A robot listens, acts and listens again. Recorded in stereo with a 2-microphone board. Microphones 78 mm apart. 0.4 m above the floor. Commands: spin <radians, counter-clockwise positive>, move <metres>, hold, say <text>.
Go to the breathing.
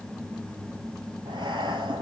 spin -1.57
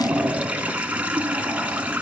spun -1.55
move 1.0
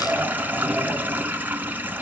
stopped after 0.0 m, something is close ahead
say Something is in my way. I am facing the breathing but have not reached it.